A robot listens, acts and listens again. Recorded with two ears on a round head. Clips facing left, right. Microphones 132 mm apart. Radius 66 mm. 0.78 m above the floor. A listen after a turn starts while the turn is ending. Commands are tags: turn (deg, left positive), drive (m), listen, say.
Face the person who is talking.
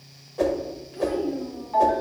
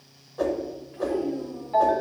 <turn deg="55"/>
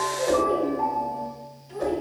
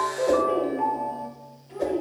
<say>Facing the child speaking.</say>